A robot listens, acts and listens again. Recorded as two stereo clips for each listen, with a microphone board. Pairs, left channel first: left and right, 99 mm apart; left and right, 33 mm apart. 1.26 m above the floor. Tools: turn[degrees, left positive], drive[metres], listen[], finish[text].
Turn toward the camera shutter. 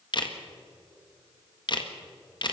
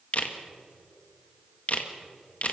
Thought: The camera shutter: about 50° left or 130° left.
Action: turn[50]
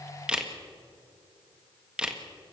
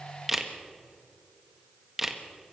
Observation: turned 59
Thought: So it is at 10° right.
Action: turn[-10]
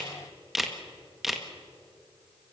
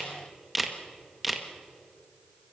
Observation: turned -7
Action: finish[Found it: a camera shutter, straight ahead, 1 to 2 m away.]